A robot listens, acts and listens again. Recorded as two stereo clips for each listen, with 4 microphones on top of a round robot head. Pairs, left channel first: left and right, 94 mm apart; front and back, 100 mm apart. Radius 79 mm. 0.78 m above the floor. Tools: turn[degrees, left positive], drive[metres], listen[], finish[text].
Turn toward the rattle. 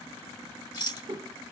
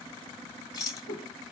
Thought: The rattle: 55° left.
Action: turn[55]
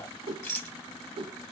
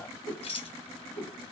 Thought: The rattle is now 25° left.
Action: turn[25]
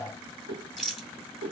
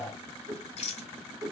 Action: finish[Facing the rattle, 1 to 2 m away.]